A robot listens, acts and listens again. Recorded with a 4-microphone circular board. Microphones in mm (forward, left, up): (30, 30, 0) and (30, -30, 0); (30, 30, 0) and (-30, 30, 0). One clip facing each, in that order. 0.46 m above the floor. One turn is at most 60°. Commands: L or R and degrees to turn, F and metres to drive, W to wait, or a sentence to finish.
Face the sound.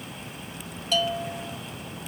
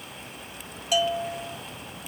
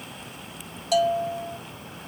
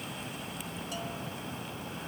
R10
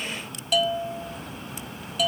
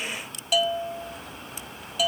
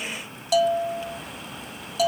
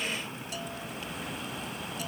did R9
Facing the bell.